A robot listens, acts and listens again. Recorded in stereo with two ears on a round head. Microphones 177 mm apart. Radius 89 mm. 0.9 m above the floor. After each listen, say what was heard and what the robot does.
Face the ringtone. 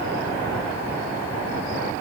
Keep listening.
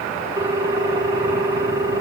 The ringtone: about 15° right or 165° right. Turn 15° right.
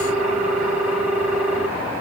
Found it: a ringtone, straight ahead, 1 to 2 m away.